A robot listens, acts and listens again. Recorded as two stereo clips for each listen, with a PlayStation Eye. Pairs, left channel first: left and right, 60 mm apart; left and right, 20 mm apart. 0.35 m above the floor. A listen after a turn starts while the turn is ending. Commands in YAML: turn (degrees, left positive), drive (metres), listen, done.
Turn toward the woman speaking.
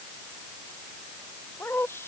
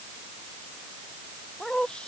turn: 45
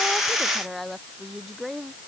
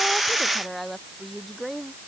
done: "Found it: a woman speaking, straight ahead."